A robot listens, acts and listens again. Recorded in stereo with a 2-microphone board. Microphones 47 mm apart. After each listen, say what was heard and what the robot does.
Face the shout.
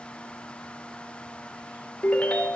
Keep listening.
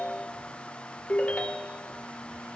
Keep listening.
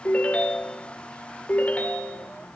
I can't make out a shout, only a ringtone.